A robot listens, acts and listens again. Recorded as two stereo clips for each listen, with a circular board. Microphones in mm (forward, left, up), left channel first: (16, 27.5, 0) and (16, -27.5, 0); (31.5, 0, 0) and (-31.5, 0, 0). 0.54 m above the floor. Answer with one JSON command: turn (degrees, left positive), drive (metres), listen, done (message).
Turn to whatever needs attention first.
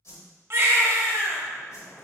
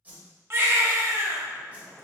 {"turn": -130}
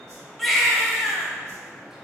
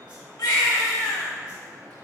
{"done": "Facing the baby crying, under 1 m away."}